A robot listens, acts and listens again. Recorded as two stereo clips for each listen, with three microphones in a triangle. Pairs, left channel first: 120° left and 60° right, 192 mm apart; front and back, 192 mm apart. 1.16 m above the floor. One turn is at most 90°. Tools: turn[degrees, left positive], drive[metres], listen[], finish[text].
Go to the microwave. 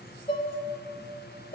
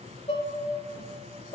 Action: listen[]
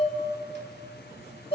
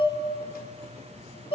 Action: listen[]
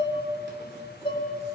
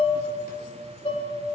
Action: finish[I can't make out a microwave to turn to.]